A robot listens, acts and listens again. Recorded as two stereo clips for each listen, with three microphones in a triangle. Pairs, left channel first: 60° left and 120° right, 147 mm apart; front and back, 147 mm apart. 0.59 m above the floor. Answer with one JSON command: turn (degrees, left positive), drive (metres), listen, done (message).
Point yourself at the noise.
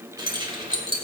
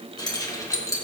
{"turn": -65}
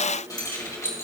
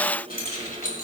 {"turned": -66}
{"turn": -10}
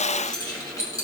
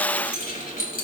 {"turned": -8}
{"done": "Found it: keys jangling, straight ahead, 2 to 4 m away."}